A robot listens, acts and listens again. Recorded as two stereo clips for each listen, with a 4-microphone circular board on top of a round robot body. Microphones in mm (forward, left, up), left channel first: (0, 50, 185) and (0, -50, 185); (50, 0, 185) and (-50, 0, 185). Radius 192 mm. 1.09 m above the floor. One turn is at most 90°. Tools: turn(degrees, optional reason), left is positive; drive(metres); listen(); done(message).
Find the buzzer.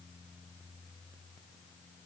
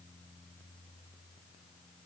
listen()
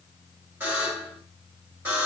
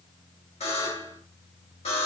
turn(degrees=-20, reason="The buzzer: 20° right.")
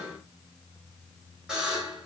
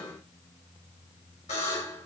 done("Found it: a buzzer, straight ahead.")